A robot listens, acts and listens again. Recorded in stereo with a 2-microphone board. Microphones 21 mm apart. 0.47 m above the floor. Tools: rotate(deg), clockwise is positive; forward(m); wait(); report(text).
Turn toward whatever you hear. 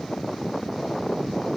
wait()
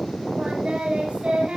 rotate(65)
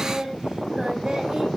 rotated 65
rotate(40)
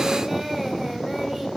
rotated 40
rotate(15)
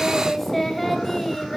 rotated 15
report("Found it: singing, straight ahead.")